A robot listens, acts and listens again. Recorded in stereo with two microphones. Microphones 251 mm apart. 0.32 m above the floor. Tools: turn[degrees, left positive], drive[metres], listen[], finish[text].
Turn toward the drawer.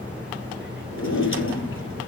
Thought: The drawer: about 55° left or 125° left.
Action: turn[55]
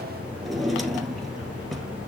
Action: finish[Found it: a drawer, straight ahead.]